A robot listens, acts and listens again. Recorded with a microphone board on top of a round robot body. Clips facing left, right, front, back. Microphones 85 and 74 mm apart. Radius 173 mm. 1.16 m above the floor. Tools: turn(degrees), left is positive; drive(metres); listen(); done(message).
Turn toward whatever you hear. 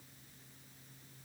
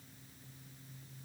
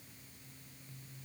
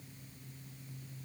listen()
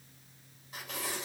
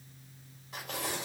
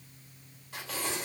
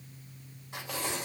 turn(degrees=-115)
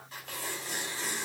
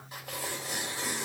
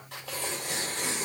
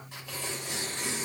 turn(degrees=-15)
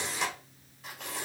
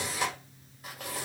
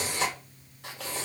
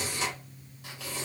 done("Facing the tearing paper, 2 to 4 m away.")